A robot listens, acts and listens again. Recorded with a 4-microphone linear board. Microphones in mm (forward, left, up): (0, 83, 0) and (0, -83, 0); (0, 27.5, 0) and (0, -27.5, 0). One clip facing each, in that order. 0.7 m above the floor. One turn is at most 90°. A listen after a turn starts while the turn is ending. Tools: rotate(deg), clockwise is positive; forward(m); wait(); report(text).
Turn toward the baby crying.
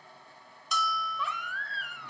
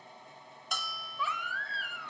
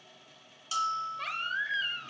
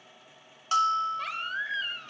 rotate(-30)
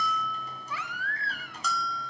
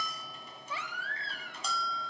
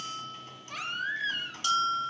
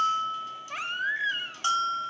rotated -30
rotate(30)
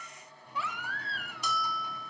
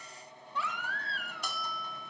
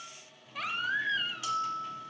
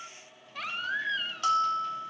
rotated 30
report("Found it: a baby crying, straight ahead.")